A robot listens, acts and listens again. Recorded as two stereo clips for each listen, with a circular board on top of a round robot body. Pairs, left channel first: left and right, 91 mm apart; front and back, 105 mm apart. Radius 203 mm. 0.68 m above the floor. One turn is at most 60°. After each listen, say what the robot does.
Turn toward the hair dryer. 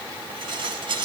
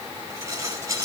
Keep listening.
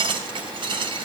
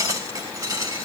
Keep listening.
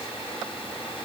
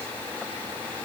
I can't make out a hair dryer, only dishes clattering.